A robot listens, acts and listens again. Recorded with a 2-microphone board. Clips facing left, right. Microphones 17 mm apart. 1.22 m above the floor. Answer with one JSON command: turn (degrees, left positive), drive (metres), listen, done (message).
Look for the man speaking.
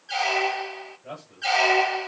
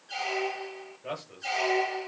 {"turn": -45}
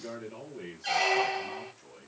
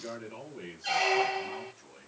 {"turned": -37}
{"turn": -15}
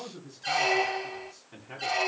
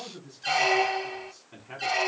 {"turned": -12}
{"turn": -10}
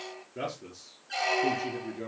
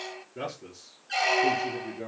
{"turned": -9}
{"done": "Facing the man speaking, 2 to 4 m away."}